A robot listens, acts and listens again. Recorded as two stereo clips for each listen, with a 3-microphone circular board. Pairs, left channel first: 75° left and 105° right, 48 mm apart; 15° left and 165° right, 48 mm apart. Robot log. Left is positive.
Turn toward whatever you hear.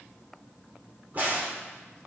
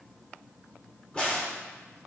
note: The crack: 55° right.
cmd yaw -55
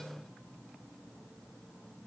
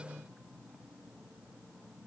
end: I heard a crack from this way, but can't make it out now.